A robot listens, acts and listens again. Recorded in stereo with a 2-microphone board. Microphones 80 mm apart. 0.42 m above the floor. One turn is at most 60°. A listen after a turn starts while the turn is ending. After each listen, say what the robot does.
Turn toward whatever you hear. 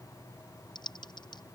Turn 60° left.
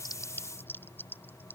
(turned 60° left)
Turn 25° left.
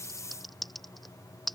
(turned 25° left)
Found it: typing on a keyboard, straight ahead.